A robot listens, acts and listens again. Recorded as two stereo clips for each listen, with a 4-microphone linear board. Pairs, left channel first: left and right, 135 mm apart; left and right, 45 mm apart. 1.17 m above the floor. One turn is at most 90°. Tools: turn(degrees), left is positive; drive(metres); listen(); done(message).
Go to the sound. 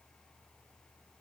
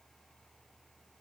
listen()
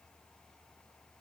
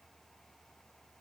listen()
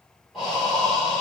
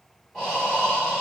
turn(degrees=30)
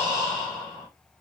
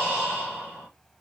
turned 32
turn(degrees=-30)
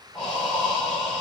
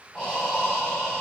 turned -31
drive(metres=1.0)
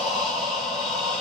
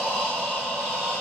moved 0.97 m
drive(metres=1.0)
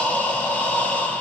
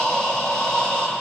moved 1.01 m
turn(degrees=10)
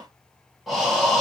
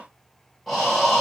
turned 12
drive(metres=1.0)
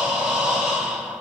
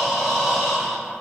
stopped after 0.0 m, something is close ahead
done("I am next to the breathing.")